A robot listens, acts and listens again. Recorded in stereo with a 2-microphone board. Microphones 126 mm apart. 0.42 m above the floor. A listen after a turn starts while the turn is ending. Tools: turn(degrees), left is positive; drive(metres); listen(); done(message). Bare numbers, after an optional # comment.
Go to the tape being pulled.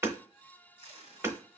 # The tape being pulled: about 60° left or 120° left.
turn(60)
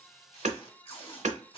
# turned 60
# So it is at 55° left.
turn(55)
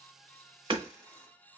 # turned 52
drive(1.0)
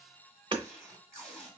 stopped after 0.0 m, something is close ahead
done("Blocked. The tape being pulled is further on, straight ahead.")